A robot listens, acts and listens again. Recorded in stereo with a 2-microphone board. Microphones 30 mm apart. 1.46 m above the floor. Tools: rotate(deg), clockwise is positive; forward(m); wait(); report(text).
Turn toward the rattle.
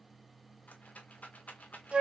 rotate(-65)
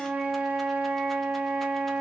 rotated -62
wait()
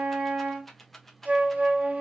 rotate(-10)
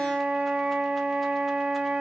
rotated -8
wait()
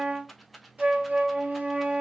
report("Found it: a rattle, straight ahead, under 1 m away.")